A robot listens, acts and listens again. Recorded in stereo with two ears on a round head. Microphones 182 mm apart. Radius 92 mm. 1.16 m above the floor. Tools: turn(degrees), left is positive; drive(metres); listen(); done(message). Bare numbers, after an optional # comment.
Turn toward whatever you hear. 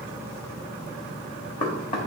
# The knocking: about 30° left or 150° left.
turn(30)
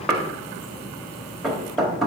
done("Found it: knocking, straight ahead, 1 to 2 m away.")